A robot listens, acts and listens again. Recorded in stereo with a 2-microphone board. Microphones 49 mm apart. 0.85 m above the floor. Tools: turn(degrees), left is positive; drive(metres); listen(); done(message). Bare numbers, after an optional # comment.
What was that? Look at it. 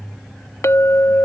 # The clink: about 75° left or 105° left.
turn(75)
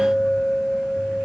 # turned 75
done("Facing the clink.")